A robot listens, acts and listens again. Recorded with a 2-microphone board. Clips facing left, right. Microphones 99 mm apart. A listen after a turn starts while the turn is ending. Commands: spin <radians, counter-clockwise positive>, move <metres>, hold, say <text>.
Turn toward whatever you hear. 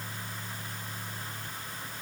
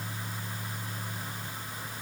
hold
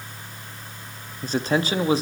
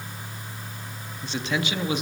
spin 0.61
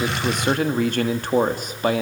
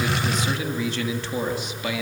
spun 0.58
spin 0.79
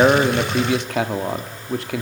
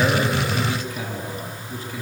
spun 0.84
spin 1.40
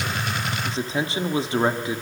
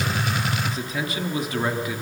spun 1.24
spin 0.52
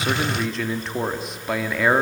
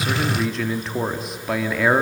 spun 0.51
say Facing the man speaking.